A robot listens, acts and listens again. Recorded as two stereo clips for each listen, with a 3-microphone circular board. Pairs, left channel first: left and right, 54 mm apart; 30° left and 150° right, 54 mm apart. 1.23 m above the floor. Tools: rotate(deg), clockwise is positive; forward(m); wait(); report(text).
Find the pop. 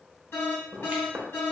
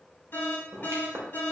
rotate(145)
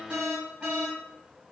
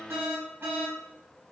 report("I heard a pop from this way, but can't make it out now.")